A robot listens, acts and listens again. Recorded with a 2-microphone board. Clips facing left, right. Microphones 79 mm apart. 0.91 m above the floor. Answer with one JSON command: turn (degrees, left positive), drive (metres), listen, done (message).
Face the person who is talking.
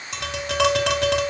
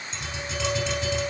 {"listen": true}
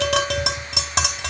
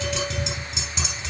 {"listen": true}
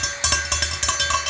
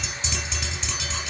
{"done": "I can't make out anyone speaking to turn to."}